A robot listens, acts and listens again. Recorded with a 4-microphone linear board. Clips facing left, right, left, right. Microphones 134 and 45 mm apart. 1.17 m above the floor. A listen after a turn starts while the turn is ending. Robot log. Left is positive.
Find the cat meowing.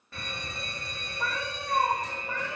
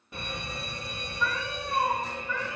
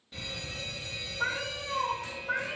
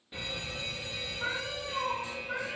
note: The cat meowing: about 55° left or 125° left.
cmd yaw +55
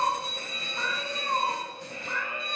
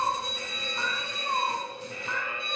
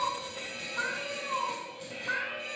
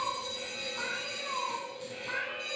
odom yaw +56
note: So it is at 55° left.
cmd yaw +55
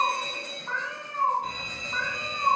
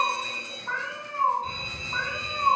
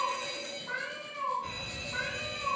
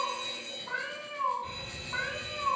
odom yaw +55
note: The cat meowing is now 10° right.
cmd yaw -10
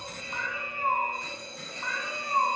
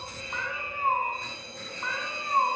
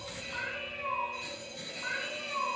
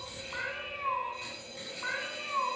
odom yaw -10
end: Facing the cat meowing, over 4 m away.